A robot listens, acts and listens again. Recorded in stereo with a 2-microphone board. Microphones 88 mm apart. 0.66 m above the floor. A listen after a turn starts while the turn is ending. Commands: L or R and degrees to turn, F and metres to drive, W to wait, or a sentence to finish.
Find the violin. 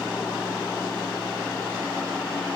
W
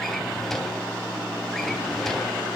W
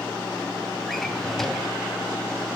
I can't make out a violin to turn to.